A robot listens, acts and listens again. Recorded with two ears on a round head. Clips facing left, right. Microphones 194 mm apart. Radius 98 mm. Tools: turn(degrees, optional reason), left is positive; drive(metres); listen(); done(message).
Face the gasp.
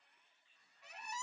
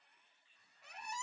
listen()
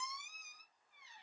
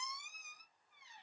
listen()
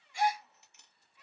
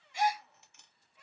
turn(degrees=-20, reason="The gasp: about 20° right or 160° right.")
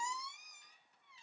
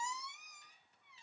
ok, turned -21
listen()
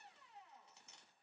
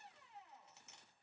done("I heard a gasp, but can't make it out now. It was about straight ahead or 140° right.")